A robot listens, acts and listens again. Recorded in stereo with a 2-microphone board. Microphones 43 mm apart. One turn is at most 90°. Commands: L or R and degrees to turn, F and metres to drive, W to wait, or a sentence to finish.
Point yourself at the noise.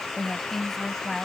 L30
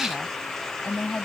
L90
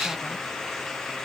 L55
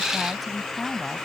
Found it: a woman speaking, straight ahead.